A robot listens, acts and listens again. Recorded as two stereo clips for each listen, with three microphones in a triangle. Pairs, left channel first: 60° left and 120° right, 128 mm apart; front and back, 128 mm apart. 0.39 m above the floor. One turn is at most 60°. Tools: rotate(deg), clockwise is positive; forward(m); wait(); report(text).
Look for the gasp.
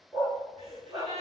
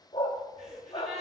rotate(60)
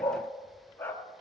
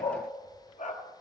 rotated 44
rotate(60)
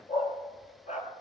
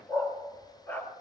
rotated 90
rotate(20)
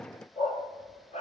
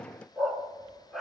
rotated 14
report("Facing where the gasp came from. I can't hear it now.")